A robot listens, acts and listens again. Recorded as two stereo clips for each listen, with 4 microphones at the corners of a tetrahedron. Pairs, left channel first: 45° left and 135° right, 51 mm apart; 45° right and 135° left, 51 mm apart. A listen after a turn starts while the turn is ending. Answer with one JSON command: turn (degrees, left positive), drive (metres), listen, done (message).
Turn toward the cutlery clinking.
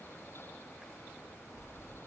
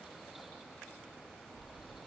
{"listen": true}
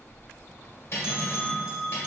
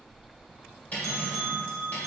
{"turn": 10}
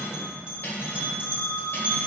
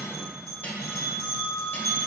{"done": "Facing the cutlery clinking."}